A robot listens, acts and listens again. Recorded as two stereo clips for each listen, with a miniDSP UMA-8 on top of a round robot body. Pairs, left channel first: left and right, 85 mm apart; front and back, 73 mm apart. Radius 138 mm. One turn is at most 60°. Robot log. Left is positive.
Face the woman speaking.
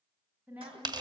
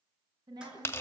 note: The woman speaking: 160° right.
cmd yaw -60
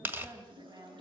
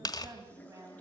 note: The woman speaking is now 135° right.
cmd yaw -60
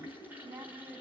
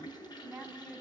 note: The woman speaking is now 95° right.
cmd yaw -60
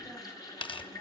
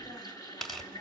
note: Nothing new. It was at 35° right.
cmd yaw -35
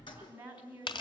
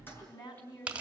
note: The woman speaking is now 20° right.
cmd yaw -20
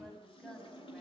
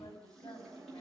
end: Facing the woman speaking.